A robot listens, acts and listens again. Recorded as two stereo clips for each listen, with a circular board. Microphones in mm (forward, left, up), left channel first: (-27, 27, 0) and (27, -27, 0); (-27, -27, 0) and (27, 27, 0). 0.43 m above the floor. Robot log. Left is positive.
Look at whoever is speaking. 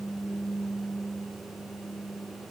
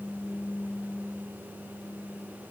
cmd idle
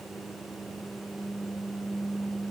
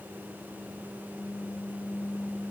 cmd idle
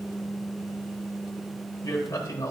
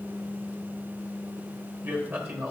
note: The man speaking: 100° left.
cmd yaw +100
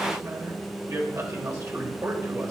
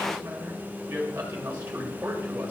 note: The man speaking is now 10° right.
cmd yaw -10
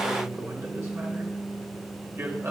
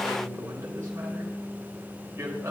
end: Found it: a man speaking, straight ahead.